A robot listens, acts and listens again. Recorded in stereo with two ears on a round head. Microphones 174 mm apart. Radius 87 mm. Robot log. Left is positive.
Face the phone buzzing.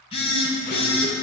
note: The phone buzzing: about 30° left or 150° left.
cmd yaw +30
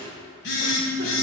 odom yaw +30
note: So it is at 120° left.
cmd yaw +120
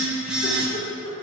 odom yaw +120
end: Facing the phone buzzing.